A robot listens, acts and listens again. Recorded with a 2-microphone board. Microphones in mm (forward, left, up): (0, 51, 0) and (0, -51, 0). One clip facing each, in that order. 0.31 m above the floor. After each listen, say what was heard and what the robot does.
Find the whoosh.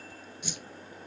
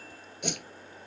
The whoosh: about 65° right or 115° right. Turn 65° right.
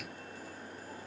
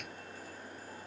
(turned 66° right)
Keep listening.
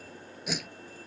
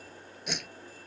Found it: a whoosh, straight ahead.